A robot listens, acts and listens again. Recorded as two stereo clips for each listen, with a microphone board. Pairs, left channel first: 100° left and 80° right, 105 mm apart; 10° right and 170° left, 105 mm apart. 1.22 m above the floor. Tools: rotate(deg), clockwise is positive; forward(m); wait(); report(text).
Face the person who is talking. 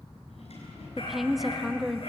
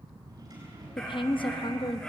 rotate(-10)
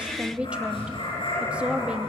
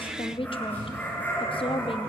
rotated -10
report("Found it: a woman speaking, straight ahead.")